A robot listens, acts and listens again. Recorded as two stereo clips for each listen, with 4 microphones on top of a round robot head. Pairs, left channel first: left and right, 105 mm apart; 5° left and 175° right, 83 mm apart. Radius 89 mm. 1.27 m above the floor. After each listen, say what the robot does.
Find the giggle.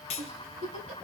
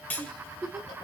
Turn 85° right.
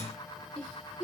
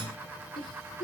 Turn 10° left.
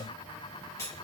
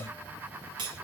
Keep listening.
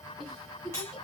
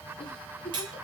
Facing the giggle.